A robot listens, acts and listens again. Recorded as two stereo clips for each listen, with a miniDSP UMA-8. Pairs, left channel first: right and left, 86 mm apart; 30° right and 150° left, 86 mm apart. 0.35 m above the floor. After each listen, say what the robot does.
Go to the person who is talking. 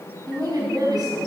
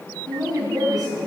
Turn 120° left.
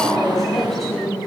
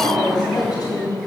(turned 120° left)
Drive 1.0 m forward.
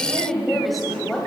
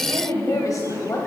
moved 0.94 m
Drive 1.0 m forward.
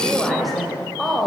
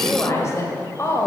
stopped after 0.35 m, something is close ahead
I am next to the woman speaking.